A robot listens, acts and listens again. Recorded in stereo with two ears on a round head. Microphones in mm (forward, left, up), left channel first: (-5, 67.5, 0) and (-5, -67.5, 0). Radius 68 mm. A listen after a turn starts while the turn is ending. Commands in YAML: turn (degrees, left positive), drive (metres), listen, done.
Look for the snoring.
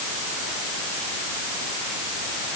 listen: true
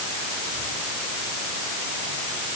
listen: true
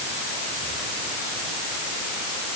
done: "I can't make out snoring."